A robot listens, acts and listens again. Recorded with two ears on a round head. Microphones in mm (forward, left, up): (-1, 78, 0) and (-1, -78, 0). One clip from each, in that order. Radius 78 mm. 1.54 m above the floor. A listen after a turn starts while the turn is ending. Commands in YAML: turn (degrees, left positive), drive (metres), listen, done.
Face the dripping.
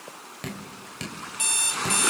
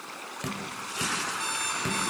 turn: 30
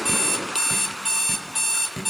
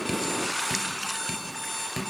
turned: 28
turn: -20
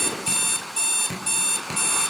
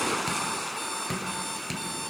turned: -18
done: "Found it: dripping, straight ahead, over 4 m away."